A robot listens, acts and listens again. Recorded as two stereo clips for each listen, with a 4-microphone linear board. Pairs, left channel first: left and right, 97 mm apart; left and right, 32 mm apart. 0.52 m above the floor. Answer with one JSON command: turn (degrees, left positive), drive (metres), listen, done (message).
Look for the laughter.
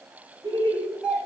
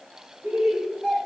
{"turn": -35}
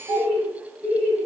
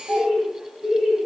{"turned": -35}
{"done": "Found it: laughter, straight ahead, 2 to 4 m away."}